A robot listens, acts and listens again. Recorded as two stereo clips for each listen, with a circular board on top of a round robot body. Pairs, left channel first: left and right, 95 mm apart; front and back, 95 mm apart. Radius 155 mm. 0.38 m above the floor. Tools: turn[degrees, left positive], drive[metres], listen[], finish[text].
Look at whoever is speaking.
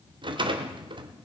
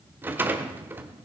Action: listen[]
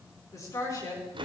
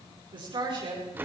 Thought: The woman speaking: 145° left.
Action: turn[145]
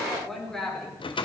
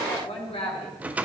Action: finish[Facing the woman speaking, over 4 m away.]